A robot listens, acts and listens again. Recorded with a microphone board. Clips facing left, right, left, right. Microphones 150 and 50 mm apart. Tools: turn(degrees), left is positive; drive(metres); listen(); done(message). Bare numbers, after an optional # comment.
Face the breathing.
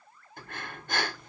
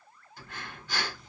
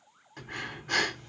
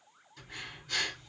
# The breathing: about 55° left or 125° left.
turn(55)
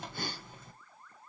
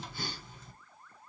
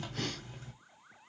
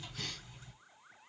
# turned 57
# So it is at 60° left.
turn(60)
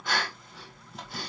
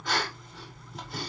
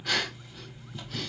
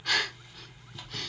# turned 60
done("Found it: breathing, straight ahead.")